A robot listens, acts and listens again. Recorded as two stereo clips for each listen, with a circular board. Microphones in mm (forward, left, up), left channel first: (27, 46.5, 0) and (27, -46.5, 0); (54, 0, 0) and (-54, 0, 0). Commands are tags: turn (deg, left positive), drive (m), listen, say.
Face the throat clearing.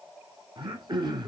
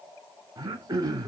<turn deg="-130"/>
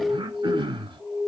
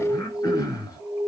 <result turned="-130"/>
<turn deg="-55"/>
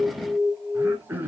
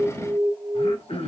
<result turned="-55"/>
<turn deg="-20"/>
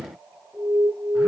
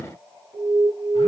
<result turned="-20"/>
<listen/>
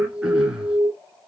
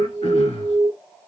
<turn deg="-10"/>
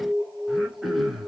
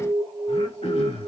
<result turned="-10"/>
<say>Found it: throat clearing, straight ahead.</say>